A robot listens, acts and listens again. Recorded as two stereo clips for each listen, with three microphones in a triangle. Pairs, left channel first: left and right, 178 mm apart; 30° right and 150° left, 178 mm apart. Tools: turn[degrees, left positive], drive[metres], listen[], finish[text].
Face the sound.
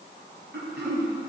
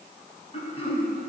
Thought: The throat clearing: 85° right.
Action: turn[-85]
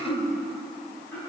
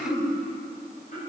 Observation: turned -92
Thought: The throat clearing is now 10° left.
Action: turn[10]
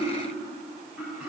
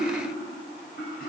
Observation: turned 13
Action: finish[Facing the throat clearing, 2 to 4 m away.]